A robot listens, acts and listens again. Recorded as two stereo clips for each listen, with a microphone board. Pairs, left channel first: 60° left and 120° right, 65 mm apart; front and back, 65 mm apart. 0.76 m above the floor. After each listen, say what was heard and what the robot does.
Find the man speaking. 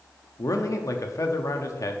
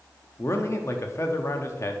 The man speaking: 40° left. Turn 40° left.
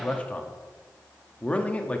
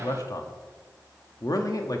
The man speaking is now 10° right. Turn 10° right.
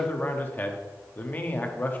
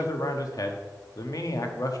Found it: a man speaking, straight ahead, under 1 m away.